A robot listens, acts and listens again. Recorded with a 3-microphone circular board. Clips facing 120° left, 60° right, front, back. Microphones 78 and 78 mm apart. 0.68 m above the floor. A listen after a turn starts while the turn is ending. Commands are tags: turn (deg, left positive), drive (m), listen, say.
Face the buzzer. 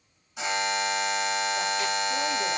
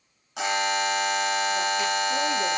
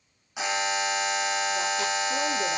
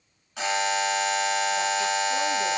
<turn deg="-75"/>
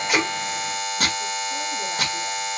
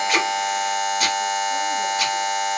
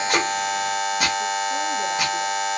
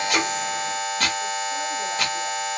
<turn deg="-25"/>
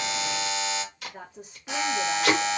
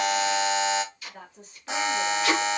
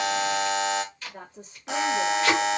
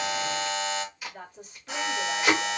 <say>Found it: a buzzer, straight ahead.</say>